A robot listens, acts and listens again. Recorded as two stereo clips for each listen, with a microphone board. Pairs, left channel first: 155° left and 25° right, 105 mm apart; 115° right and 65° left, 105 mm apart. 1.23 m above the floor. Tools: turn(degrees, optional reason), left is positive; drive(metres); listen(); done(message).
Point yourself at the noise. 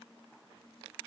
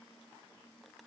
listen()
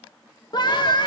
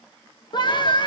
turn(degrees=-155, reason="The scream: 155° right.")
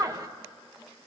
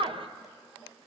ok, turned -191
turn(degrees=35, reason="The scream is now 35° left.")
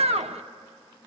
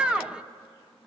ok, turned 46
turn(degrees=-15, reason="The scream is now 15° right.")
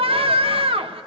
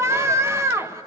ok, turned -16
done("Facing the scream.")